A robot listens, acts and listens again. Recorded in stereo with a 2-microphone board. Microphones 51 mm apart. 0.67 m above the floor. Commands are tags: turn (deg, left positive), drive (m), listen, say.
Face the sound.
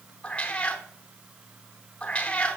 <turn deg="25"/>
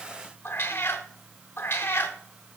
<turn deg="130"/>
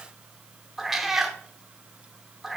<say>Facing the cat meowing, under 1 m away.</say>